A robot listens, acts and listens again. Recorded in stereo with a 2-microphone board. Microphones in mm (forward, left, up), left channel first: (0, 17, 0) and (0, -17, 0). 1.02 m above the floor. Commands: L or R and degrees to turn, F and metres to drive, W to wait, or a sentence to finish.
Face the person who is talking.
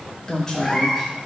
L15
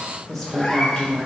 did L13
Found it: a woman speaking, straight ahead.